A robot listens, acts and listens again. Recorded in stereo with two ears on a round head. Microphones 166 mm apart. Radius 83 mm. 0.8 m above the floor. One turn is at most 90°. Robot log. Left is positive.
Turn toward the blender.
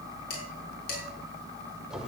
cmd idle
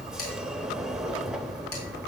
cmd idle
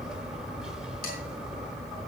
end: I can't make out a blender, only dishes clattering and a sliding door.